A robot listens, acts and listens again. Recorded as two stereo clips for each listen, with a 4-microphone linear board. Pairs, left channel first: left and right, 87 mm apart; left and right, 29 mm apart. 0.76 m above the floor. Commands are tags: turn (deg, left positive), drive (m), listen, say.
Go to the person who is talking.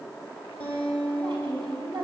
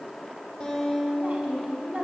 <turn deg="-65"/>
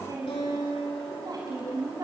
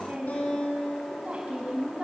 <turn deg="-45"/>
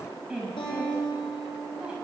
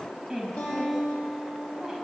<turn deg="-10"/>
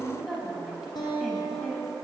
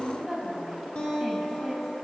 <drive m="1.0"/>
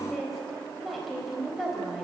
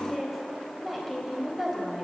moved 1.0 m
<drive m="1.0"/>
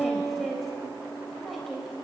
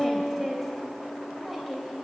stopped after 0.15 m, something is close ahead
<say>Blocked. The woman speaking is further on, straight ahead.</say>